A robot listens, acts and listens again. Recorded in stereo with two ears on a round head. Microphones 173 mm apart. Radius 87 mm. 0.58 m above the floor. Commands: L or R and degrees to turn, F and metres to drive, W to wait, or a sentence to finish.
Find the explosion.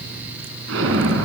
R90
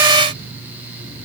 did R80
R10
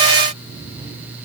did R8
Facing where the explosion came from. I can't hear it now.